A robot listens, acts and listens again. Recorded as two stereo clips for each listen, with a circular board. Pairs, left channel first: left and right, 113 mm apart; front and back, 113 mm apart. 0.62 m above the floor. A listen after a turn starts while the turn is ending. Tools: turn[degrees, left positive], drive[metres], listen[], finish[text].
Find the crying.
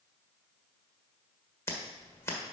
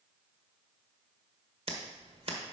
Action: listen[]
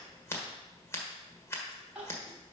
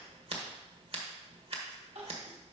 Thought: The crying: 170° right.
Action: turn[-170]
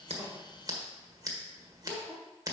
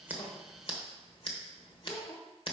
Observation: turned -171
Action: finish[Facing the crying, 2 to 4 m away.]